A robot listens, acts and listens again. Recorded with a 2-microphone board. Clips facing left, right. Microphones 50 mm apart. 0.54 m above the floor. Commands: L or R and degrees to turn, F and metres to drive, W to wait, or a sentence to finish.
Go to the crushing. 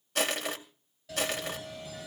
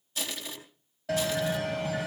L60
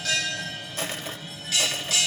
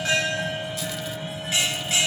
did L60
W
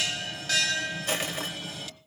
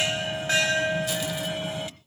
W
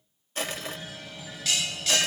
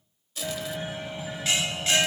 L50
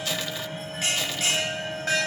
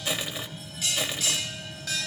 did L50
R20
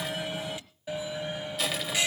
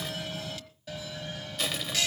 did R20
F1.0
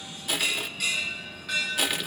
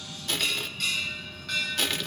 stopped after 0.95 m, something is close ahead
L10
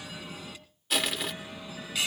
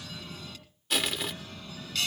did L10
Arrived at the crushing, straight ahead.